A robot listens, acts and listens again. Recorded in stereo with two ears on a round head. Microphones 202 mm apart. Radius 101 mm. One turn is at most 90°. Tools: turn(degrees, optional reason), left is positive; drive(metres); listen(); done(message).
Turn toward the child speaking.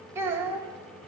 turn(degrees=-30)
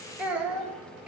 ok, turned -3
turn(degrees=-30)
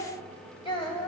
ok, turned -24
turn(degrees=20, reason="So it is at 20° left.")
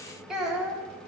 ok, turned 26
done("Facing the child speaking.")